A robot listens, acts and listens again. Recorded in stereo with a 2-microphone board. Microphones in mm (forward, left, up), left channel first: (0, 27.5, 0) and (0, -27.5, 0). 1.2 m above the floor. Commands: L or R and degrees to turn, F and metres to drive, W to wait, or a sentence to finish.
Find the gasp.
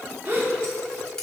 R35
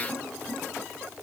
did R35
W
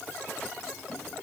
I heard a gasp, but can't make it out now. It was about straight ahead or 110° right.